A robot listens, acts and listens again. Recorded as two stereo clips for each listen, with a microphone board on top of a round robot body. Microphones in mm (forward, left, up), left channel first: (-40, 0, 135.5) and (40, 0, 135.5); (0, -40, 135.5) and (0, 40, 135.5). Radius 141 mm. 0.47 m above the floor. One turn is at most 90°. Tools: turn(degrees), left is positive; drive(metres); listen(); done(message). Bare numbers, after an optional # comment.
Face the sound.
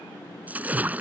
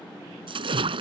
# The splash: 75° left.
turn(75)
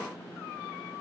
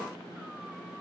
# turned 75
done("I heard a splash from this way, but can't make it out now.")